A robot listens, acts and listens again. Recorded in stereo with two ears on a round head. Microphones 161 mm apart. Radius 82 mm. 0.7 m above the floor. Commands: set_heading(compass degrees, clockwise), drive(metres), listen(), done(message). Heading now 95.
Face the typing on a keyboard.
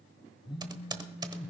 set_heading(120)
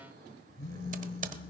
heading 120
set_heading(250)
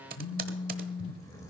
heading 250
set_heading(300)
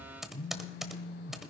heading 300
done("Facing the typing on a keyboard, 1 to 2 m away.")